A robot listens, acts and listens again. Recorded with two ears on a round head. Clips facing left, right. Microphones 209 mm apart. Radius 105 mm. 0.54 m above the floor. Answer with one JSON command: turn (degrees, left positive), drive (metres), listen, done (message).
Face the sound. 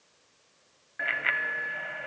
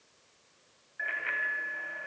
{"turn": 75}
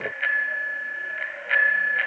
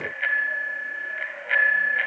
{"done": "Facing the bicycle bell, 2 to 4 m away."}